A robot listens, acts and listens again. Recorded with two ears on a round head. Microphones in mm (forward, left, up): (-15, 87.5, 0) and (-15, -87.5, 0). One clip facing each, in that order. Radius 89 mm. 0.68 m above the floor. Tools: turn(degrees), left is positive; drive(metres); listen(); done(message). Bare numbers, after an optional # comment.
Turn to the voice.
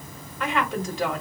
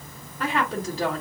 # The woman speaking: about 35° right or 145° right.
turn(-35)
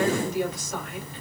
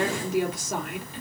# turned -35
# So it is at 110° right.
turn(-110)
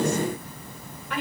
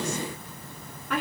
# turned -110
# The woman speaking is now 45° right.
turn(-45)
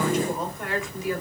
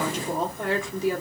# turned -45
# The woman speaking is now 30° right.
turn(-30)
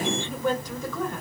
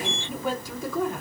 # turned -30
# The woman speaking is now 10° right.
turn(-10)
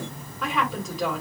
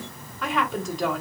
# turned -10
done("Found it: a woman speaking, straight ahead.")